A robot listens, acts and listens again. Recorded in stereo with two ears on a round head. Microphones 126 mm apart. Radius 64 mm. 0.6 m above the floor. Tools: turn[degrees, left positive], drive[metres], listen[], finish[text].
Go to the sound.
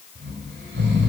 Action: turn[-90]
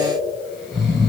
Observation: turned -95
Action: drive[1.0]
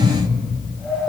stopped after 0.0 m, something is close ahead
Action: finish[Something is in my way. I am facing the snoring but have not reached it.]